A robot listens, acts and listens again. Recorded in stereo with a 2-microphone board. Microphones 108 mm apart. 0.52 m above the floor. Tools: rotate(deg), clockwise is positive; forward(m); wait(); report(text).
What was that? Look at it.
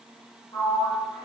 rotate(-50)
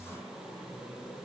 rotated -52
wait()
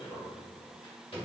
rotate(-75)
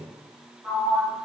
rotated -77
report("Facing the sliding door.")